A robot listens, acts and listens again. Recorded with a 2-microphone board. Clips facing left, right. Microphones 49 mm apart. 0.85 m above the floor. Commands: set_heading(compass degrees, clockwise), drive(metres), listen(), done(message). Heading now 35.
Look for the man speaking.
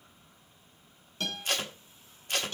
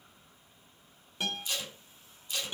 listen()
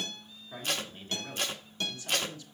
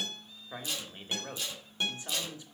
set_heading(55)
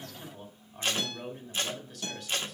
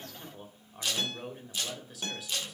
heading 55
done("Facing the man speaking, 1 to 2 m away.")